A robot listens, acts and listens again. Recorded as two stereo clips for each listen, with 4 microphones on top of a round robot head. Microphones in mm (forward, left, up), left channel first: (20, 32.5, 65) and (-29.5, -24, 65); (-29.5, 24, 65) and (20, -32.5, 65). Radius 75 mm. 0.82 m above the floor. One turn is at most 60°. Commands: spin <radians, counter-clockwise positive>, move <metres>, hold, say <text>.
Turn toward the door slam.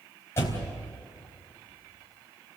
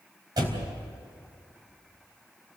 spin -0.17
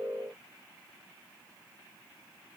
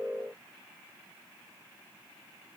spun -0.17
say Facing where the door slam came from. I can't hear it now.